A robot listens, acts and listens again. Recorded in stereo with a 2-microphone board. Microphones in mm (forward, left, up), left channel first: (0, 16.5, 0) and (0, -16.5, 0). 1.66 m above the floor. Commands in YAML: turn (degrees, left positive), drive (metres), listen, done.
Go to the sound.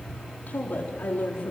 turn: 70
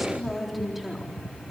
drive: 1.0
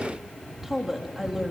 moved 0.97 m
turn: -10
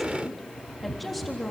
drive: 1.0
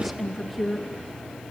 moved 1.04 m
drive: 1.0
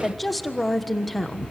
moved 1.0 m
drive: 1.0
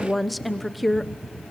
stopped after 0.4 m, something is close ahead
done: "I am next to the woman speaking."